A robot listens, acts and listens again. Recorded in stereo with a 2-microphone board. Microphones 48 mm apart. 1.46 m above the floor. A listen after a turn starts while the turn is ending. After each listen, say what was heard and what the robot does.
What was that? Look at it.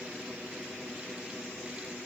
Keep listening.
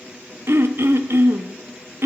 The throat clearing: about 60° right or 120° right. Turn 60° right.
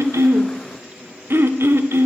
So it is at 55° right. Turn 55° right.
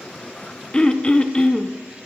The throat clearing is now 20° left. Turn 20° left.
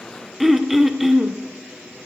Found it: throat clearing, straight ahead.